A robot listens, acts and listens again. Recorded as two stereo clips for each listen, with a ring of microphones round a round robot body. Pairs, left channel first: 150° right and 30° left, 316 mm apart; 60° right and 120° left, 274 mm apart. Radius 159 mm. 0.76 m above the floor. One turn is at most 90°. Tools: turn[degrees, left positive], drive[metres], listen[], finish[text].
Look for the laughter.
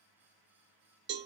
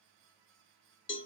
Action: listen[]
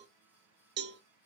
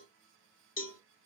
Action: listen[]
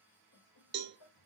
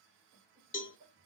Thought: The laughter: 165° right.
Action: turn[-90]
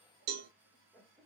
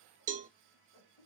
Thought: The laughter is now 60° right.
Action: turn[-60]
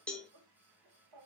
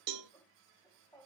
Thought: The laughter is now 15° left.
Action: turn[15]
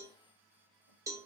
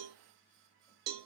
Action: listen[]
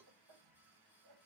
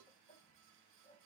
Action: finish[Facing the laughter, 1 to 2 m away.]